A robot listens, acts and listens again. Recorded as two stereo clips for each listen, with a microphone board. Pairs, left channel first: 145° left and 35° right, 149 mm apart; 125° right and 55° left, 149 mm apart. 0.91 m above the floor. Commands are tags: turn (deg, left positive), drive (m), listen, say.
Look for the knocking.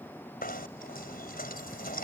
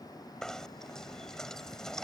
<turn deg="150"/>
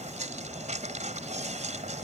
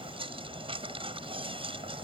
<say>Found it: knocking, straight ahead.</say>